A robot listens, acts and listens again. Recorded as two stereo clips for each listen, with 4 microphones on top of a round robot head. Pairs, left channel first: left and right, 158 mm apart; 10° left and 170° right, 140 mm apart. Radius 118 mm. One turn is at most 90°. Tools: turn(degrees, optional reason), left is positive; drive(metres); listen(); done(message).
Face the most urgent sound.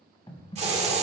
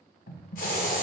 listen()
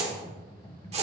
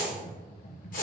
listen()
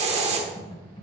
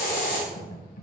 done("I can't make out anything urgent to turn to.")